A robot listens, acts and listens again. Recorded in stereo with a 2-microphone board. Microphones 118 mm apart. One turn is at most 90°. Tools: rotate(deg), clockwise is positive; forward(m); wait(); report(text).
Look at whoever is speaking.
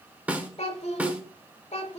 rotate(-70)
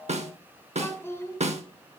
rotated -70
rotate(-25)
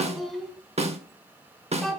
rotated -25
report("Found it: a child speaking, straight ahead.")